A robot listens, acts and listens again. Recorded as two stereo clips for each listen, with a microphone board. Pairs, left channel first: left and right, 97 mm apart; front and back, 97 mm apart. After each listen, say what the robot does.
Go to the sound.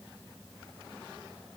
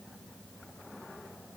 Keep listening.
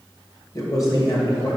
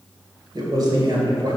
Turn 140° left.
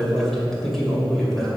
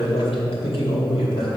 Drive 1.0 m forward.
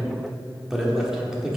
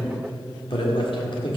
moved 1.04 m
Drive 1.0 m forward.
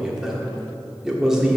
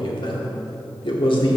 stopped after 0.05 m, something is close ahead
Arrived at the man speaking, straight ahead.